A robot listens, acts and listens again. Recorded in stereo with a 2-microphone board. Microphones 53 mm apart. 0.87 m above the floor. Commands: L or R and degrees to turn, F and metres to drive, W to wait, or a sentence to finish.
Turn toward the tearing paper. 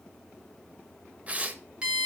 R25
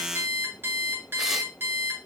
W
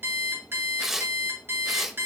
Found it: tearing paper, straight ahead.